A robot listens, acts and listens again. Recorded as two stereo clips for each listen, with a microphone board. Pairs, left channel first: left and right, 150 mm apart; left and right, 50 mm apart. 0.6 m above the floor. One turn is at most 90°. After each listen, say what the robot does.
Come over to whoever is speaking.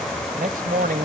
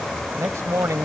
Turn 75° right.
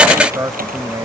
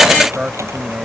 Turn 25° right.
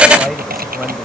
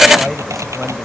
Keep listening.
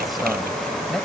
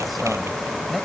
Keep listening.
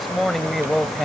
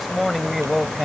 Drive 1.0 m forward.
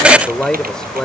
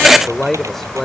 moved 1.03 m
Drive 1.0 m forward.
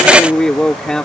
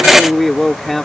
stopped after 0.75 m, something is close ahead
I am next to the man speaking.